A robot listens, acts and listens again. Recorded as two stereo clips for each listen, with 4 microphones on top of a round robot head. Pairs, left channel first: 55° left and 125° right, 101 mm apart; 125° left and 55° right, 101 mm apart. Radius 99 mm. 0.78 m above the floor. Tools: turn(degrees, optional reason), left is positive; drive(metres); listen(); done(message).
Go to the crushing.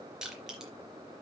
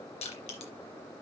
turn(degrees=150, reason="The crushing: 150° left.")
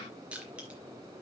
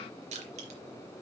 turn(degrees=-50, reason="The crushing is now 50° right.")
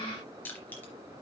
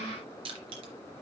turn(degrees=-20, reason="The crushing is now 20° right.")
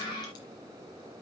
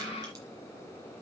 listen()
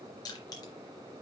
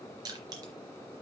drive(metres=1.0)
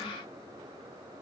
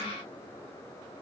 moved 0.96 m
listen()
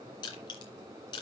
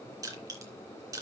drive(metres=1.0)
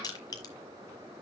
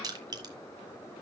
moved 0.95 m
drive(metres=1.0)
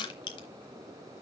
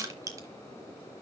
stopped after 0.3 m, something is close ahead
done("Arrived at the crushing, straight ahead.")